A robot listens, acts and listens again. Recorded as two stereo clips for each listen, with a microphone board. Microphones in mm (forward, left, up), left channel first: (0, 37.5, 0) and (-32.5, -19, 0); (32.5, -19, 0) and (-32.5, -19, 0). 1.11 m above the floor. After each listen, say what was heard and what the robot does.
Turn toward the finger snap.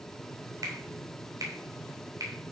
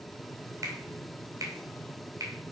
The finger snap: 145° right. Turn 145° right.
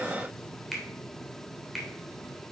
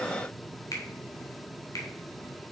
The finger snap is now 30° right. Turn 30° right.
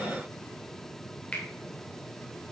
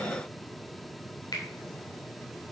The finger snap is now 10° right. Turn 10° right.
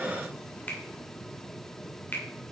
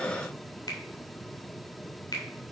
Facing the finger snap, 2 to 4 m away.